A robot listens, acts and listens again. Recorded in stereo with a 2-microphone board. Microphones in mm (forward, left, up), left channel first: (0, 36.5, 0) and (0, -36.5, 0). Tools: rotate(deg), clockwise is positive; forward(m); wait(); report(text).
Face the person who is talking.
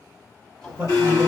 rotate(20)
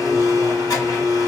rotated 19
wait()
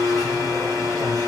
wait()
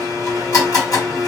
report("I heard a man speaking, but can't make it out now. It was about 5° right or 140° right.")